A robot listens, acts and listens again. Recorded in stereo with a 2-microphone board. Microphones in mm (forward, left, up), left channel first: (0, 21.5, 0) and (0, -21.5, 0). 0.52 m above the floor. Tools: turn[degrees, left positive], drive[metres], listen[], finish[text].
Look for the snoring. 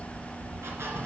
Action: listen[]
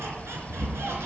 Thought: The snoring: about 35° right or 145° right.
Action: turn[-35]
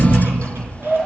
Action: finish[Found it: snoring, straight ahead, 2 to 4 m away.]